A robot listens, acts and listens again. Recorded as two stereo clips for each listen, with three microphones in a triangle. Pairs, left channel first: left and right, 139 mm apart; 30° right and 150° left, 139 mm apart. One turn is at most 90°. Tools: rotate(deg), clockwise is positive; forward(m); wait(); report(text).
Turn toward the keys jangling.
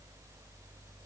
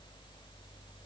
wait()
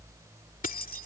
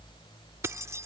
rotate(-80)
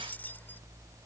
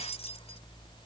wait()
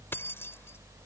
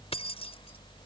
rotate(-15)
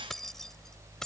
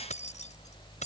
report("Facing the keys jangling.")